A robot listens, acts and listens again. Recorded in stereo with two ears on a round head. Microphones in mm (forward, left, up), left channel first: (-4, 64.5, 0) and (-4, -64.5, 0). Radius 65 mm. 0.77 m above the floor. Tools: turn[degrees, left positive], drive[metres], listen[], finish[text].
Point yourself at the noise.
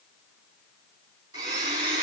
Thought: The blender: about 25° right or 155° right.
Action: turn[-25]
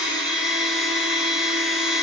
Action: finish[Facing the blender.]